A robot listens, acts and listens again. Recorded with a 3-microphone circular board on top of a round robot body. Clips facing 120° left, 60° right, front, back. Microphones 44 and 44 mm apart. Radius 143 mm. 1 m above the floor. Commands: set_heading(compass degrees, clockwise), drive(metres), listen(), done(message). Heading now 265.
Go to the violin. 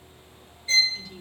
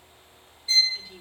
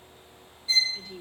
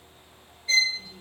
set_heading(105)
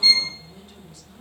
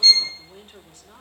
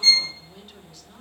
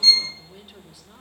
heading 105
set_heading(55)
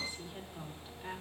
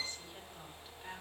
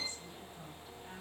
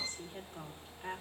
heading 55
listen()
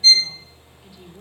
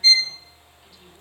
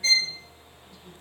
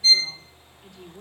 set_heading(65)
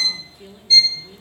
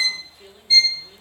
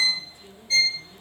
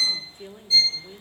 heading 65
drive(1.0)
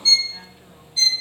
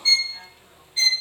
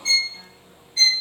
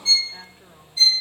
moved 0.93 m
drive(1.0)
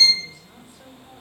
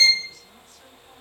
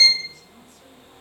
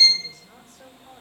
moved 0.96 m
set_heading(75)
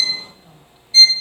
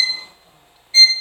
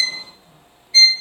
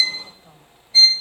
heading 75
drive(1.0)
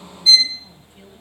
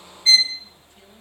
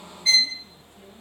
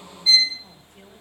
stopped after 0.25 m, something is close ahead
set_heading(90)
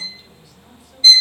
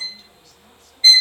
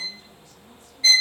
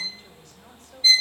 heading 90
done("I am next to the violin.")